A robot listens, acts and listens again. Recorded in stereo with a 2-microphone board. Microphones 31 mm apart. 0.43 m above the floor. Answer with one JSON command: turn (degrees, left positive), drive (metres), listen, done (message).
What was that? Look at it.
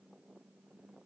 {"listen": true}
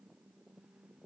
{"listen": true}
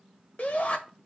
{"turn": 60}
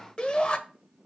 {"turn": 35}
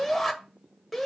{"done": "Facing the shout."}